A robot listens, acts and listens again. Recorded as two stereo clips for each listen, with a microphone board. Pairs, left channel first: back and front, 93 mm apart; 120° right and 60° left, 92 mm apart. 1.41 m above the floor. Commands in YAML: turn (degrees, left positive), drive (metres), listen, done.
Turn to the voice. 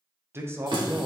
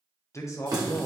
turn: -65
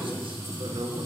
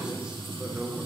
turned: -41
turn: -20
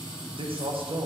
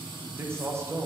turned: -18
done: "Facing the man speaking, under 1 m away."